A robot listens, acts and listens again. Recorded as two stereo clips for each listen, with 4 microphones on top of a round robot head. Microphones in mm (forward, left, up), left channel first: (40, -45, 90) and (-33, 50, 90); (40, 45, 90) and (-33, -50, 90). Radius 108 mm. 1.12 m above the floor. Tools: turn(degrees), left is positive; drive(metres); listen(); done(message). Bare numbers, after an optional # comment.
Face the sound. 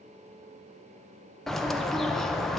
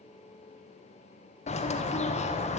# The bird: 35° left.
turn(35)
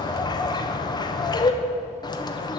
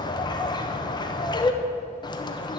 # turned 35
done("Facing the bird.")